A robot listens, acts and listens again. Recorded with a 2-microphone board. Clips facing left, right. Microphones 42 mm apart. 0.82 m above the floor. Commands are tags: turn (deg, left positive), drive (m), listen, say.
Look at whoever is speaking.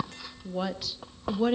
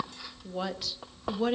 <turn deg="30"/>
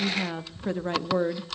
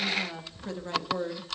<turn deg="150"/>
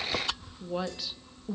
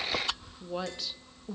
<say>Found it: a woman speaking, straight ahead, 1 to 2 m away.</say>